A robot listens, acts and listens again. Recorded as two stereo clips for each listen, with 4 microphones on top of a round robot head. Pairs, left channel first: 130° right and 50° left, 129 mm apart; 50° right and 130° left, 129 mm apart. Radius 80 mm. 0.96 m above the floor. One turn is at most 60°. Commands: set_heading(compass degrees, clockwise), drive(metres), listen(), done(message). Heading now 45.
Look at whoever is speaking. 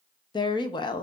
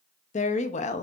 set_heading(105)
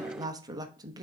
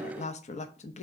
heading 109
set_heading(124)
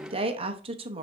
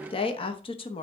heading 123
done("Found it: a woman speaking, straight ahead.")